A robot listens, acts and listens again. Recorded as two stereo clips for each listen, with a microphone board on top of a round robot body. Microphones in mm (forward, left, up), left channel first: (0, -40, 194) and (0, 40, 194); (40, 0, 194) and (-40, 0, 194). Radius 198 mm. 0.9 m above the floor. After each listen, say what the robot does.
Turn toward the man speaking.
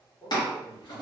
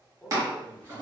Turn 80° right.
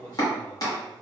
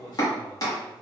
Turn 20° right.
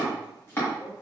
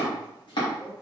Keep listening.
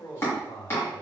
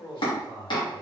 Turn 45° right.
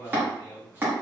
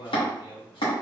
Found it: a man speaking, straight ahead.